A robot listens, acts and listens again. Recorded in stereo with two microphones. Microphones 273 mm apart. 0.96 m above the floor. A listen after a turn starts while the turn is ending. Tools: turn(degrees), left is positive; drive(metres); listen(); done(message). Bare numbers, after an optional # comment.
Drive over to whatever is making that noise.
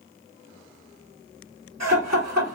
# The laughter: about 70° right or 110° right.
turn(-70)
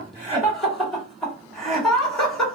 drive(1.0)
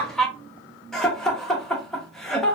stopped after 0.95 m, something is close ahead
done("Arrived at the laughter, straight ahead.")